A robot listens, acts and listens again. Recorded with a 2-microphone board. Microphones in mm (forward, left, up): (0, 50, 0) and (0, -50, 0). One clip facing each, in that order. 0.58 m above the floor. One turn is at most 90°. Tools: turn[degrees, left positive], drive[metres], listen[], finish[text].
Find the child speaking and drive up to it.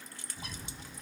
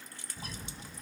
Action: listen[]
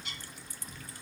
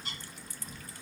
Action: listen[]
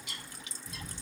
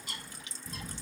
Action: finish[I can't make out a child speaking, only a bird.]